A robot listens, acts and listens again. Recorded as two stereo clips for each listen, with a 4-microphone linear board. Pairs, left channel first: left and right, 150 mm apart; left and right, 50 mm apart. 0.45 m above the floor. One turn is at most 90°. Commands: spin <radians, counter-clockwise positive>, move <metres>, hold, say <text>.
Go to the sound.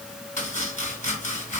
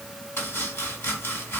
spin 0.96
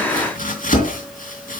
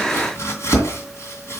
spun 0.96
spin 1.22
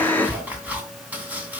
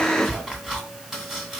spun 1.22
spin -0.17
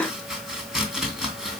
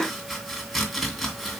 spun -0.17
move 1.0
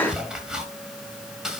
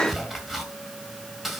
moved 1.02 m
move 1.0
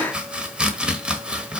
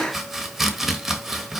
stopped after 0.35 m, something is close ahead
say I am next to the chopping.